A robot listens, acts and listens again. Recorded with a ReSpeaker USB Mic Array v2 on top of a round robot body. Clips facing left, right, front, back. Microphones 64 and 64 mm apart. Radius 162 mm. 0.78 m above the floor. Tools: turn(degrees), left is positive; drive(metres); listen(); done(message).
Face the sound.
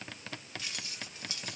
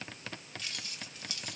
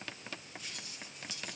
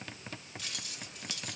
turn(degrees=155)
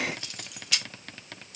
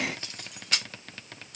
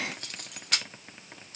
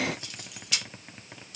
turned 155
turn(degrees=-40)
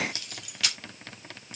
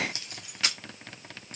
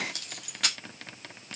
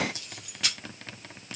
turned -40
turn(degrees=-30)
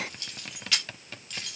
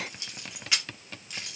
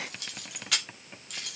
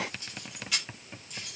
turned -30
turn(degrees=-20)
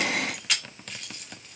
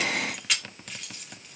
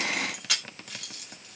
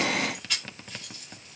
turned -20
done("Facing the keys jangling.")